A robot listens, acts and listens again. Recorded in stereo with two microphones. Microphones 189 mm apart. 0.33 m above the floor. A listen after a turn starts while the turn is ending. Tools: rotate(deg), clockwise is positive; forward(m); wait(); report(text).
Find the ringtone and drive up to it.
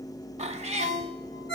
rotate(-70)
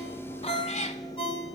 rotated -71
rotate(-30)
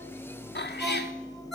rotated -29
forward(1.0)
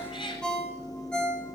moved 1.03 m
forward(1.0)
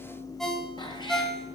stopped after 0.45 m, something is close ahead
report("I am next to the ringtone.")